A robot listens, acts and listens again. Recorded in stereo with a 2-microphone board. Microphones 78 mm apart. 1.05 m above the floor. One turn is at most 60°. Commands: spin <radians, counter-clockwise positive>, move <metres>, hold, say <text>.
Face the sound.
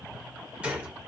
spin -0.26
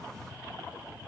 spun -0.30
hold
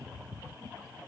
say I heard a gunshot, but can't make it out now. It was about straight ahead or 145° right.